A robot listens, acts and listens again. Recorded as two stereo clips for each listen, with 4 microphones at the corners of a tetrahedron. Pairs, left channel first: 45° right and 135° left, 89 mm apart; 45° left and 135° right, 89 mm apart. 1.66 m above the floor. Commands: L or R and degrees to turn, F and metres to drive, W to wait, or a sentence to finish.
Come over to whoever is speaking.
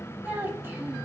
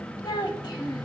L70
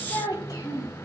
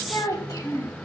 F1.0
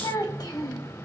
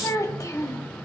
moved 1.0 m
F1.0
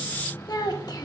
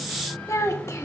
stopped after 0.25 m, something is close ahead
R10
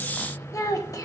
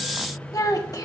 I am next to the child speaking.